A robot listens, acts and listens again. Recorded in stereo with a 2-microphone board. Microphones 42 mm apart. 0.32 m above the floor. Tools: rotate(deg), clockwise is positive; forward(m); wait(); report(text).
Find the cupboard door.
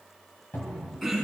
rotate(-60)
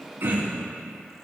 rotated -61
wait()
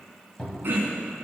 rotate(-25)
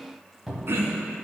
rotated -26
report("Found it: a cupboard door, straight ahead, 1 to 2 m away.")